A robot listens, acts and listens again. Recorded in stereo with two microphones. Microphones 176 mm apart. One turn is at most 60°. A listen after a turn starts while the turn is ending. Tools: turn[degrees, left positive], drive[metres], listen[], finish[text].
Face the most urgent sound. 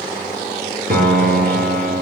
Action: listen[]
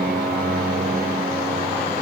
Action: listen[]
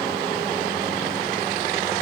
Action: finish[I can't make out anything urgent to turn to.]